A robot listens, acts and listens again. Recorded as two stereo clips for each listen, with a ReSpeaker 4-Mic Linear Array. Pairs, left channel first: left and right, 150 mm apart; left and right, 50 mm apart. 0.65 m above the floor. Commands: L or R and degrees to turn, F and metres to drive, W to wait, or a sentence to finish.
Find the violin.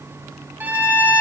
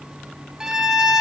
R30
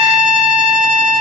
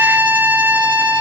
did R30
R135
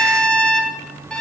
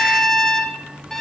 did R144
Facing the violin, under 1 m away.